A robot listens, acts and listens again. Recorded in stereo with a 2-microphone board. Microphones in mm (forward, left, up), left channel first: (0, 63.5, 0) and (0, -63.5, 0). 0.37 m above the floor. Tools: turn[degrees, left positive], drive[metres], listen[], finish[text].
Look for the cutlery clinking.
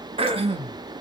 Action: listen[]
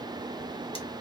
Action: listen[]
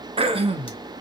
Action: finish[I can't make out cutlery clinking, only throat clearing.]